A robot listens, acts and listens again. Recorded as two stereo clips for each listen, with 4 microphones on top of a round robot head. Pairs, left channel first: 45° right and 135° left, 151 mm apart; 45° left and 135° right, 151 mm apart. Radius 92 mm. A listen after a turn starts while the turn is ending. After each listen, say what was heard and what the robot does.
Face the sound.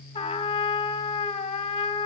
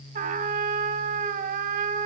The trumpet: 100° right. Turn 100° right.
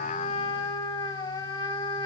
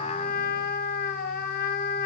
The trumpet is now 20° left. Turn 20° left.
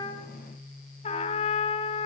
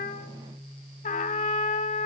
Facing the trumpet, under 1 m away.